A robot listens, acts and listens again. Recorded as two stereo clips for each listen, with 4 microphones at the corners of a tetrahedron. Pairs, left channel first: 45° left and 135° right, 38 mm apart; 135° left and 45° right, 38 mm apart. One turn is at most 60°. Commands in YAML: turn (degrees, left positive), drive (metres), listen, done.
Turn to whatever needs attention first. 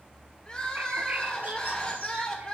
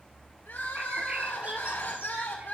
turn: 60
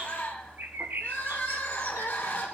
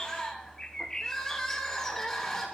turn: 55
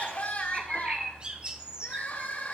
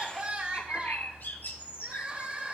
done: "Facing the crying."